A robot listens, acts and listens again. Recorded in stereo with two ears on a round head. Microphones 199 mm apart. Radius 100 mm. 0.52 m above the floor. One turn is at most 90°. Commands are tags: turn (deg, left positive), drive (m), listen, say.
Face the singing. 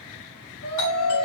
<turn deg="65"/>
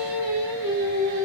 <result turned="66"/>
<turn deg="-15"/>
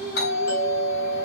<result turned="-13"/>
<say>Facing the singing, 2 to 4 m away.</say>